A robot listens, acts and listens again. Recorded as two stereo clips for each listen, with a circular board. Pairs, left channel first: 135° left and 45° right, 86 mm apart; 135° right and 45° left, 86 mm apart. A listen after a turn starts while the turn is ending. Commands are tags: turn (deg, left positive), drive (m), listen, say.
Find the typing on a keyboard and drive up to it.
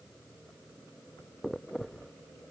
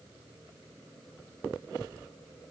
<listen/>
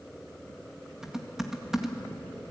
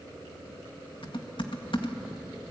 <turn deg="-130"/>
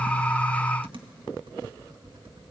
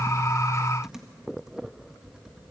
<turn deg="-40"/>
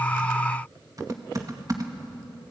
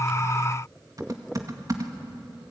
<drive m="1.0"/>
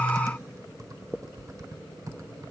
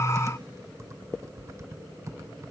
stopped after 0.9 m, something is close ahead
<say>Arrived at the typing on a keyboard, straight ahead.</say>